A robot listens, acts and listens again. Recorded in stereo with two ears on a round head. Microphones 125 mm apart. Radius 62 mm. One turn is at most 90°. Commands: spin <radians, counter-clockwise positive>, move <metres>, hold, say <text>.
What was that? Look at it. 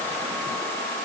hold
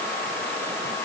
hold
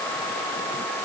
say I can't make out anything to turn to.